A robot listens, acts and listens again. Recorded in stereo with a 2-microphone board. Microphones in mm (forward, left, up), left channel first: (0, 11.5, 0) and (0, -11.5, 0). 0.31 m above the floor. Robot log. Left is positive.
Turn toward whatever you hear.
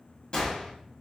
note: The gunshot: about 35° left or 145° left.
cmd yaw +35
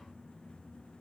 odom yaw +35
cmd idle
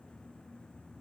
end: I heard a gunshot, but can't make it out now. It was about straight ahead or 110° left.